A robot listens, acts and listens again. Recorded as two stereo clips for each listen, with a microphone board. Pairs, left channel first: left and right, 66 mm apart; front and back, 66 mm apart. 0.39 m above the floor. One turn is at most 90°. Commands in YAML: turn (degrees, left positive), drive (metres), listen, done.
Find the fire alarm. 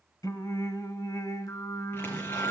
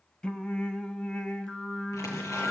listen: true
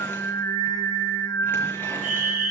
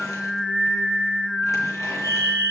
done: "Facing the fire alarm."